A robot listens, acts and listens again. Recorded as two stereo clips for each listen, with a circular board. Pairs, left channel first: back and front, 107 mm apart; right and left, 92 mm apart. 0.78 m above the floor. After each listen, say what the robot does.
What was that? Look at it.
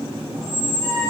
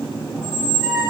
Turn 10° right.
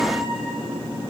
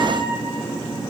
Keep listening.
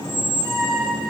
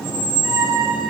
Facing the squeak, over 4 m away.